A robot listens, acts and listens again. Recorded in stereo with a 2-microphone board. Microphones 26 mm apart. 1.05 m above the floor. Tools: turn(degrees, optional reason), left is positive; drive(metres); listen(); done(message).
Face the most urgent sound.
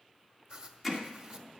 listen()
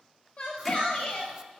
turn(degrees=30, reason="The shout: about 30° left or 150° left.")
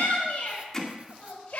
turn(degrees=120, reason="So it is at 120° left.")
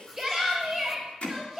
done("Found it: a shout, straight ahead, over 4 m away.")